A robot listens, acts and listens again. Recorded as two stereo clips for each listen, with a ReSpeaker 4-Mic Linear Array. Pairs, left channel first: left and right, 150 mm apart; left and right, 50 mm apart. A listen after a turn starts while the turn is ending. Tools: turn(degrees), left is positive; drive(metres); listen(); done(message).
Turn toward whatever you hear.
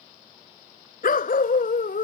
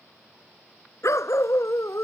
turn(degrees=75)
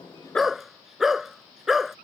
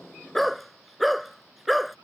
done("Found it: a dog barking, straight ahead.")